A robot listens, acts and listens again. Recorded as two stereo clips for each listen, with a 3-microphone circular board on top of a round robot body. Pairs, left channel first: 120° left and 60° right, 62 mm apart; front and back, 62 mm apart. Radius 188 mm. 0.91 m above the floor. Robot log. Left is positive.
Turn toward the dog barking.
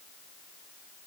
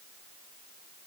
cmd idle
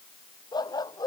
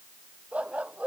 note: The dog barking: 105° left.
cmd yaw +105
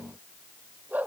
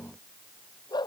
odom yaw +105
end: Facing the dog barking.